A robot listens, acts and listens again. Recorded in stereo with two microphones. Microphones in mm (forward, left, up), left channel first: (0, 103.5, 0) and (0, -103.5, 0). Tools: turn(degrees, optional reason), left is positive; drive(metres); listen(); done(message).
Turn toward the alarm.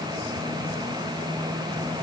listen()
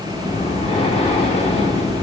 listen()
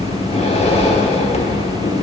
done("I can't make out an alarm to turn to.")